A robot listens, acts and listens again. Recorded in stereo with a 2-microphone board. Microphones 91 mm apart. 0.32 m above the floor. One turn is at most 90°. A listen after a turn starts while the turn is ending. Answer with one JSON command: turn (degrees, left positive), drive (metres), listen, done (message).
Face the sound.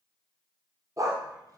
{"turn": -40}
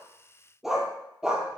{"done": "Facing the dog barking, 2 to 4 m away."}